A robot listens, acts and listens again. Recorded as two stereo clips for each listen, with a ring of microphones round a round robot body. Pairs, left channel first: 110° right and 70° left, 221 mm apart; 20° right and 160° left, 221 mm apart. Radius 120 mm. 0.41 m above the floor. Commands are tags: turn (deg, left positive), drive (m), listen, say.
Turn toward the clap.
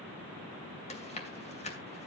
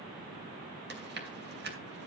<listen/>
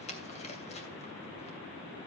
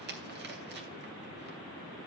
<listen/>
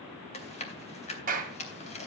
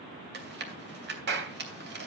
<turn deg="120"/>
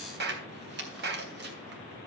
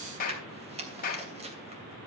<turn deg="30"/>
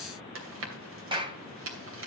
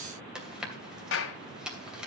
<say>Found it: a clap, straight ahead.</say>